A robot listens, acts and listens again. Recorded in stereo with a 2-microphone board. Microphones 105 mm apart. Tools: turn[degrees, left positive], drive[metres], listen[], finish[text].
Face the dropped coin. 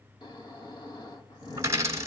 Thought: The dropped coin: about 30° right or 150° right.
Action: turn[-30]
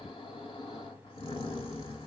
Action: listen[]
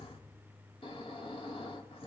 Action: finish[I heard a dropped coin, but can't make it out now. It was about straight ahead or 120° right.]